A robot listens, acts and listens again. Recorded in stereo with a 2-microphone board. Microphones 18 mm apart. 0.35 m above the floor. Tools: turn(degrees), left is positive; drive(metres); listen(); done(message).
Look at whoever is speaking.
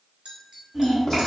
turn(degrees=-30)
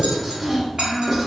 turn(degrees=-140)
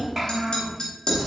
turn(degrees=-15)
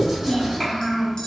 done("Found it: a child speaking, straight ahead, 1 to 2 m away.")